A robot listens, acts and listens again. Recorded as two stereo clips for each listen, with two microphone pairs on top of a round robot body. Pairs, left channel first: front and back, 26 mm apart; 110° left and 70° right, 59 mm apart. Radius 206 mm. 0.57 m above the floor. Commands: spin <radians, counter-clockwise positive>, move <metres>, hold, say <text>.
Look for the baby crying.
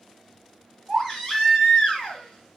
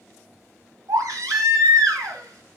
spin -1.57
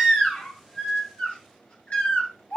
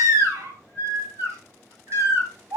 spin -0.44
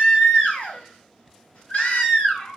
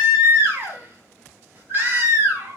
spin -0.17
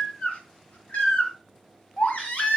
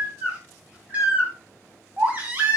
say Found it: a baby crying, straight ahead, 2 to 4 m away.